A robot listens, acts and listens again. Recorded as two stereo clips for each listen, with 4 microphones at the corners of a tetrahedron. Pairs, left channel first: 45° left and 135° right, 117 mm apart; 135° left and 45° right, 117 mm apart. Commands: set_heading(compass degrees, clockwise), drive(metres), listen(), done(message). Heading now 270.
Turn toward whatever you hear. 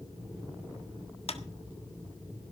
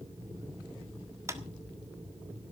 set_heading(250)
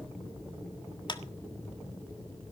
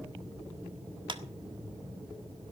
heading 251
done("Facing the clap.")